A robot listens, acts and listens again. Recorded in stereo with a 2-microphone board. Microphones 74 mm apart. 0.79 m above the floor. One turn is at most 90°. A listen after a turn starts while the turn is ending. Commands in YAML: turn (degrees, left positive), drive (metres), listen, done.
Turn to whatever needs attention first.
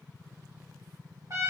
listen: true
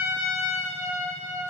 listen: true
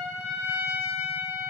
done: "I can't make out anything urgent, only a trumpet."